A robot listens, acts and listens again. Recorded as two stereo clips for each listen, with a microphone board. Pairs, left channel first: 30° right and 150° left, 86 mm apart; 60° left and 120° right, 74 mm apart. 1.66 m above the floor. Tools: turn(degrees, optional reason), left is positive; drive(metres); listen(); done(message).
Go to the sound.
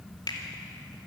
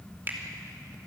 turn(degrees=-60, reason="The finger snap: 60° right.")
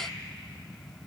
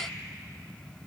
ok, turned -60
listen()
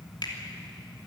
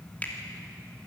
listen()
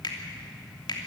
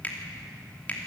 turn(degrees=-10, reason="The finger snap is now 10° right.")
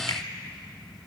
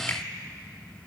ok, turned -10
listen()
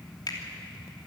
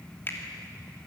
drive(metres=1.0)
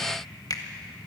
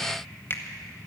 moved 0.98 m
drive(metres=1.0)
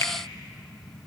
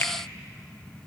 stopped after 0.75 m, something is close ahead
turn(degrees=10, reason="The finger snap is now 10° left.")
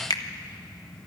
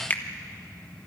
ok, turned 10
done("Arrived at the finger snap, straight ahead.")